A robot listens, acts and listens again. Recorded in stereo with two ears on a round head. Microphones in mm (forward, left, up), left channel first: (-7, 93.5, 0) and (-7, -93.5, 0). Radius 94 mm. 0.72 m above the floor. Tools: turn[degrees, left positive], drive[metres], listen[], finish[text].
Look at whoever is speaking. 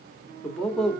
Action: turn[30]
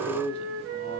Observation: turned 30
Thought: So it is at 145° left.
Action: turn[145]
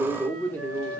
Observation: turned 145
Thought: The man speaking is now 10° left.
Action: turn[10]
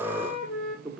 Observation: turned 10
Action: finish[Facing the man speaking, 1 to 2 m away.]